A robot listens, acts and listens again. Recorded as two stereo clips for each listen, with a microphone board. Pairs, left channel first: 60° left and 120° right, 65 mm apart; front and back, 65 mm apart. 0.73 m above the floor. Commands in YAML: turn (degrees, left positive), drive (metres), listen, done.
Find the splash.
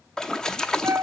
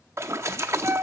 turn: 140
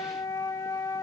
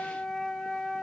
done: "I heard a splash from this way, but can't make it out now."